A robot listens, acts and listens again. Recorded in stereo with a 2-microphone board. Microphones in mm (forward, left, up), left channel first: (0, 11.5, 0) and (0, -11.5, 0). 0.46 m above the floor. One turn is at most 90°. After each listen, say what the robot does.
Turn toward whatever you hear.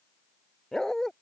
Turn 20° left.
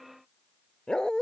Turn 90° left.
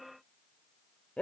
Turn 75° left.
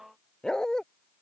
Turn 30° left.
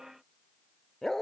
Turn 15° left.
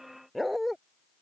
Facing the dog barking.